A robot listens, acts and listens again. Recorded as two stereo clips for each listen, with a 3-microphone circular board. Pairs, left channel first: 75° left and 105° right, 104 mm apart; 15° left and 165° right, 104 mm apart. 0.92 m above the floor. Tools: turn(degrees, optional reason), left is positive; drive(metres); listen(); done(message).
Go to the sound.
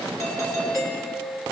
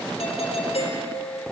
turn(degrees=15, reason="The doorbell: 15° left.")
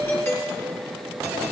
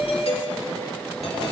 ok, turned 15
turn(degrees=10, reason="The doorbell is now 10° left.")
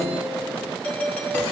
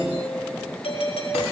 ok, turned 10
drive(metres=1.0)
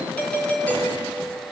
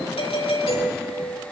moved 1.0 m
drive(metres=1.0)
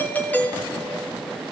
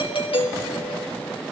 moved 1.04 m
drive(metres=1.0)
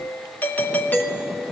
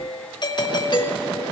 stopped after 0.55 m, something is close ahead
turn(degrees=10, reason="The doorbell is now 10° left.")
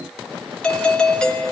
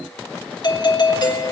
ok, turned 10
done("I am next to the doorbell.")